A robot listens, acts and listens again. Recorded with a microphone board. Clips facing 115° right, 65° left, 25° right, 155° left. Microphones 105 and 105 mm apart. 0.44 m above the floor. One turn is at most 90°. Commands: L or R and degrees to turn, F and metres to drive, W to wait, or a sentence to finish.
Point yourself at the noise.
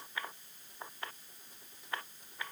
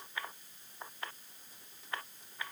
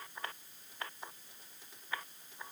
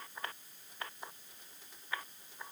W
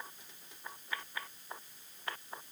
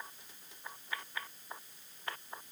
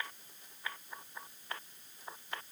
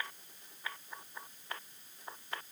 W
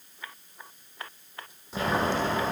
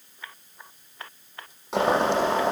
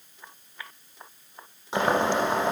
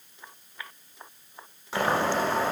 L50
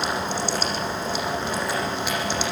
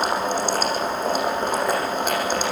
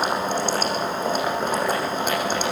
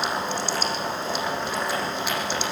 L25
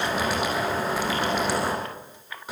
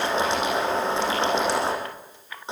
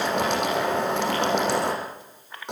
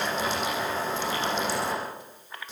Facing the boiling.